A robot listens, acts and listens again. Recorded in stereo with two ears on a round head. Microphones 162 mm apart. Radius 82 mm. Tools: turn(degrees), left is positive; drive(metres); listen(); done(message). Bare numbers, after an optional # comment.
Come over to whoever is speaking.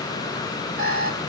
listen()
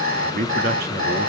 # The man speaking: about 55° right or 125° right.
turn(-55)
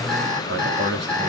# So it is at 70° right.
turn(-70)
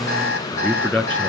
# The man speaking is now 10° left.
turn(10)
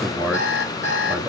drive(1.0)
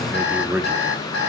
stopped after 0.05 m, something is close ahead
done("Something is in my way. I am facing the man speaking but have not reached it.")